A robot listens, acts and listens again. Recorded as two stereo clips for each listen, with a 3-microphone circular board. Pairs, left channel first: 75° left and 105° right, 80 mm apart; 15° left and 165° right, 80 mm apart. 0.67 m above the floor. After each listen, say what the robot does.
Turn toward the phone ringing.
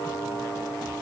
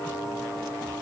Keep listening.
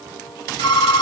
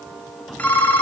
Turn 85° left.
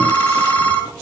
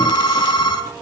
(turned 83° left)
Found it: a phone ringing, straight ahead.